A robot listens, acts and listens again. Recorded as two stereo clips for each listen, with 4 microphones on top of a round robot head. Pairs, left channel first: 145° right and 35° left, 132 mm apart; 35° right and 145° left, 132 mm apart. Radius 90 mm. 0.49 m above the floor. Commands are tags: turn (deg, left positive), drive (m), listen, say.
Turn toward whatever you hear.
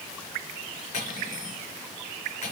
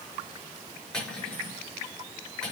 <turn deg="-115"/>
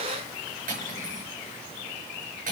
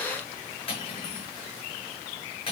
<turn deg="15"/>
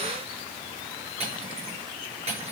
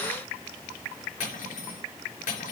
<say>Found it: cutlery clinking, straight ahead, over 4 m away.</say>